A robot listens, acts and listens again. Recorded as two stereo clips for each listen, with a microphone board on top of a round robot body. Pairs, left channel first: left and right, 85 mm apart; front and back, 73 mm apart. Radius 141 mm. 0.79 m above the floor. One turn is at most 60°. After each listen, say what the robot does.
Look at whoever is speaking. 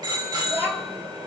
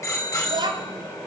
Turn 60° right.
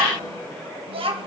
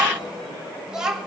Turn 60° right.
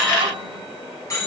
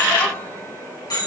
Turn 40° right.
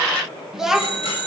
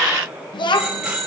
Found it: a child speaking, straight ahead, 1 to 2 m away.